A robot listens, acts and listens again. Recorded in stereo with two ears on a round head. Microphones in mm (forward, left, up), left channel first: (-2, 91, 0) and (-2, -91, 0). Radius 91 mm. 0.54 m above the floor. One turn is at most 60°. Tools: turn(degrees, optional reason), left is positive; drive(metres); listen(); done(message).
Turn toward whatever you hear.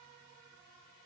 listen()
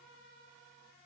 listen()
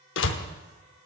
turn(degrees=60, reason="The door slam: about 65° left or 115° left.")
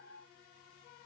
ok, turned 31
listen()
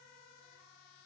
done("I heard a door slam, but can't make it out now. It was about 35° left or 85° left.")